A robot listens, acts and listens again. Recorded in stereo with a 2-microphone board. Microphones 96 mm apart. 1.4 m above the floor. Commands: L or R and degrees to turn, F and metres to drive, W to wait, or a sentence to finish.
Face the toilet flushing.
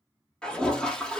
L30
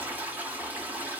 R20
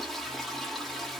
Found it: a toilet flushing, straight ahead.